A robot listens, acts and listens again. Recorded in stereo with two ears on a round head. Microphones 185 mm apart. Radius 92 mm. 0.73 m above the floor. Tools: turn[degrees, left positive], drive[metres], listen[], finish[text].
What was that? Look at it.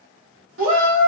Thought: The shout: about 75° right or 105° right.
Action: turn[-75]
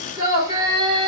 Thought: So it is at 20° right.
Action: turn[-20]
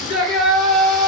Action: finish[Found it: a shout, straight ahead.]